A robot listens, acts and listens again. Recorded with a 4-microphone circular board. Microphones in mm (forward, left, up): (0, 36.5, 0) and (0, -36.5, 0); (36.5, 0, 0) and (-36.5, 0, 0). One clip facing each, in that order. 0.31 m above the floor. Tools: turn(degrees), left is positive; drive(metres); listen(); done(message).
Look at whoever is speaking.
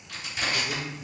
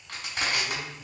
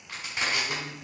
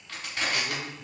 turn(degrees=95)
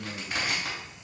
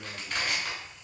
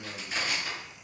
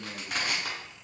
turn(degrees=-35)
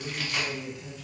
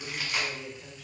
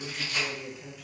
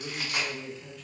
turn(degrees=-75)
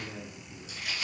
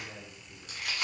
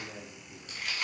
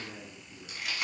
turn(degrees=-40)
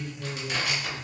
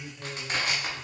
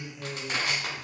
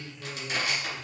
done("Found it: a man speaking, straight ahead, 1 to 2 m away.")